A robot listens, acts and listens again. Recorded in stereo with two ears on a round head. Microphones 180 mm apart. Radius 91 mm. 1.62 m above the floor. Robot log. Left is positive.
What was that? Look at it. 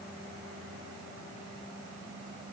cmd idle
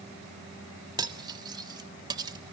note: The cutlery clinking: about 20° right or 160° right.
cmd yaw -20
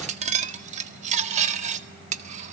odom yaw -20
note: So it is at 135° right.
cmd yaw -135
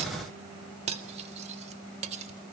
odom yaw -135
note: The cutlery clinking is now 35° right.
cmd yaw -35
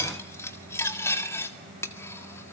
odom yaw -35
note: The cutlery clinking is now 15° left.
cmd yaw +15
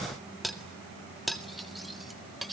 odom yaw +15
end: Facing the cutlery clinking.